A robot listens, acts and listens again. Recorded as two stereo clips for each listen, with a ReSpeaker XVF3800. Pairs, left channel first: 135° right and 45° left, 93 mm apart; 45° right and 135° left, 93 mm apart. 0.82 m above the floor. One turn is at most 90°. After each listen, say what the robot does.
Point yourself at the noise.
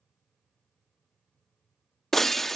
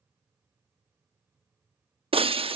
Turn 90° left.
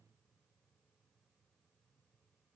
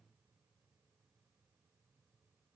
Turn 45° left.
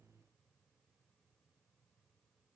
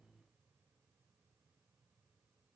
Facing where the breaking glass came from. I can't hear it now.